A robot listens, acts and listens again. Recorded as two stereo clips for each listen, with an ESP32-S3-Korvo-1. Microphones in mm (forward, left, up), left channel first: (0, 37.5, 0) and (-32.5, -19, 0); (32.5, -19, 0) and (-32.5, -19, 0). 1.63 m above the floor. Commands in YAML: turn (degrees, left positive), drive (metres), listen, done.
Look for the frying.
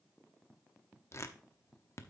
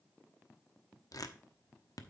listen: true
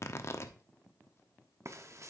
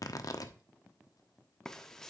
turn: -80
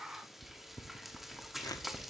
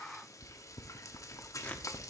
turn: -35
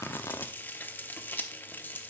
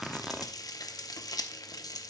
done: "Found it: frying, straight ahead."